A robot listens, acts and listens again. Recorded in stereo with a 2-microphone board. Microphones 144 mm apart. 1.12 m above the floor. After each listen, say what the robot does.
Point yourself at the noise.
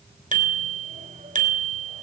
Turn 75° right.
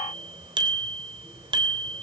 Turn 35° right.
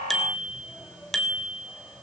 Facing the bicycle bell, 2 to 4 m away.